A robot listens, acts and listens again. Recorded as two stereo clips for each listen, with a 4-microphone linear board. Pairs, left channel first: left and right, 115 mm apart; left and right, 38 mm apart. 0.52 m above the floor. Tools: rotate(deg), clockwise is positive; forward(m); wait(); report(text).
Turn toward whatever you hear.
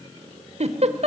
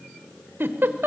rotate(70)
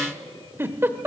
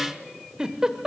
rotate(20)
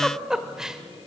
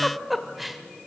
report("Facing the giggle, 1 to 2 m away.")